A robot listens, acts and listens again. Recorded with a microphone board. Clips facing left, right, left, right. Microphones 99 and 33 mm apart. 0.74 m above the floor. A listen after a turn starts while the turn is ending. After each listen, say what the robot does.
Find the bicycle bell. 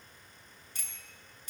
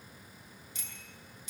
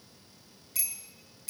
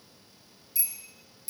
Turn 50° left.
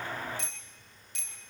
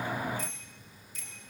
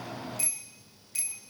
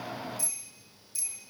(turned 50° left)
Turn 75° left.
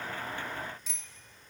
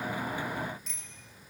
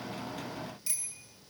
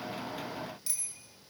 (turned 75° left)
Found it: a bicycle bell, straight ahead, over 4 m away.